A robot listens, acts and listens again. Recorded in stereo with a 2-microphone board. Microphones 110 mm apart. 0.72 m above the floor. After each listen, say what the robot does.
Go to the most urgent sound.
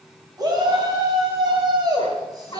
Turn 35° right.
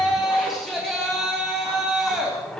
Drive 1.0 m forward.
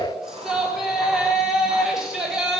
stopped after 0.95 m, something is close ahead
Something is in my way. I am facing the shout but have not reached it.